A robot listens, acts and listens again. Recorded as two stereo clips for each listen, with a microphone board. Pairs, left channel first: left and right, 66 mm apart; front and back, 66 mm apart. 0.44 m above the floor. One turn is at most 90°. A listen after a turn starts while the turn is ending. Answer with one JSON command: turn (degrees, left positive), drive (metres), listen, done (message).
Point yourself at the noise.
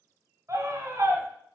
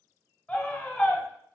{"turn": -65}
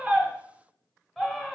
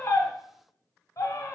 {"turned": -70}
{"done": "Facing the scream, 1 to 2 m away."}